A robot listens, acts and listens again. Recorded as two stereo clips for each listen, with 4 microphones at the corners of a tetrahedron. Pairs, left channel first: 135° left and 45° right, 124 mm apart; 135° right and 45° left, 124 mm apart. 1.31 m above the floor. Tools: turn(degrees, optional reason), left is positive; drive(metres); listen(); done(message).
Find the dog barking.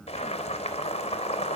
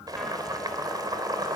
listen()
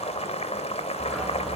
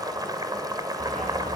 turn(degrees=45, reason="The dog barking: 45° left.")
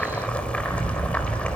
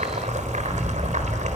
done("Found it: a dog barking, straight ahead.")